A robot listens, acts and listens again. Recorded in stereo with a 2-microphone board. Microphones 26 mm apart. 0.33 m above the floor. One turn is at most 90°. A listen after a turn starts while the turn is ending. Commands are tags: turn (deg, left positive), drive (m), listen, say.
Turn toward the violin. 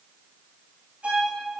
<turn deg="-65"/>
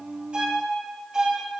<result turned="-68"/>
<turn deg="-30"/>
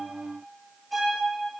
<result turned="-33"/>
<say>Found it: a violin, straight ahead, 2 to 4 m away.</say>